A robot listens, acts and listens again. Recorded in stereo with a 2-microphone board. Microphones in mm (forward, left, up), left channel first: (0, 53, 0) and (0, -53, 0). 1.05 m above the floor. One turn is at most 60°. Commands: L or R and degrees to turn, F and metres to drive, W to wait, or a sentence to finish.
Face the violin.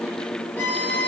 L30
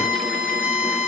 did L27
R15
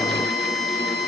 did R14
Facing the violin, 2 to 4 m away.